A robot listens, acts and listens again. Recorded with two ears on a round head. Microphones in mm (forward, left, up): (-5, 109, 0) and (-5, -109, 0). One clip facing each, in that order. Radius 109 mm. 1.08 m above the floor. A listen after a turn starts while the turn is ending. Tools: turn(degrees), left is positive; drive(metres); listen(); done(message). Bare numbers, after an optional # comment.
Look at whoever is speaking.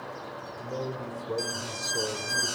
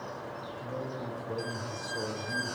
# The man speaking: about 60° left or 120° left.
turn(60)
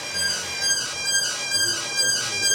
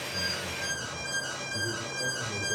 listen()
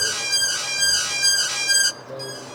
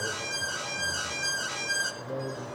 listen()
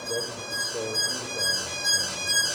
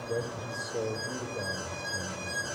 done("I heard a man speaking, but can't make it out now. It was about straight ahead or 60° left.")